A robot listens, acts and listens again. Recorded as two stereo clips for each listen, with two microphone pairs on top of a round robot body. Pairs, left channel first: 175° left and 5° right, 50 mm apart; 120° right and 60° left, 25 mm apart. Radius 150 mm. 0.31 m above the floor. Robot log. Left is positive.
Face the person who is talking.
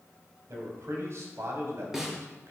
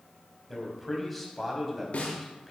note: The man speaking: 35° right.
cmd yaw -35
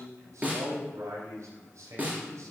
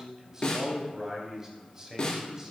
note: The man speaking is now 10° right.
cmd yaw -10
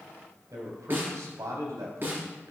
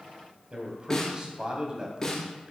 end: Facing the man speaking, 2 to 4 m away.